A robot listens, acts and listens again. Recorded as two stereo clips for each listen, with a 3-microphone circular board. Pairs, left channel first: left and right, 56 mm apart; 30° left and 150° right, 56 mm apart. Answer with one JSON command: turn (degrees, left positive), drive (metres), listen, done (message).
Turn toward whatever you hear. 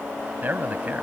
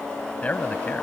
{"turn": -35}
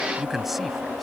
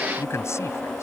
{"done": "Facing the man speaking."}